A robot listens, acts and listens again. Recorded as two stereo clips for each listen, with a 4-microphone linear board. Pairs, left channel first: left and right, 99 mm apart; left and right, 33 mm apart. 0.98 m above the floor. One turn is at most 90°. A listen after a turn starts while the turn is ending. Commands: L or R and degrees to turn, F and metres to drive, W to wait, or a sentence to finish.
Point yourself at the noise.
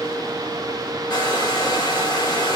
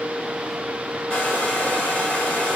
L45
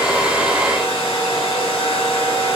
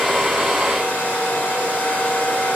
L90
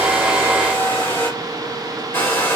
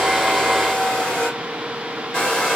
L25
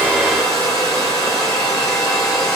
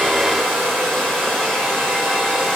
Facing the hair dryer, 1 to 2 m away.